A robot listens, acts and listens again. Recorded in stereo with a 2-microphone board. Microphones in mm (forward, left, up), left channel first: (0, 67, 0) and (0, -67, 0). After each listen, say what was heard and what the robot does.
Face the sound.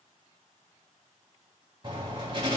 The writing: about 40° right or 140° right. Turn 40° right.
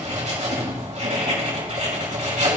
So it is at 95° right. Turn 95° right.
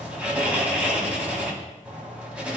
The writing is now 10° right. Turn 10° right.
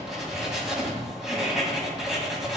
Facing the writing.